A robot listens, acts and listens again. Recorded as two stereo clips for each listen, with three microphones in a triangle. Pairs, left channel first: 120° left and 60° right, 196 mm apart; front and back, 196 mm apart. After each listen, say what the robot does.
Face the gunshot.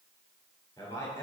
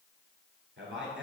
Keep listening.
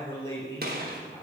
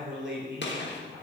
Turn 20° right.
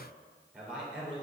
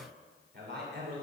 I heard a gunshot from this way, but can't make it out now.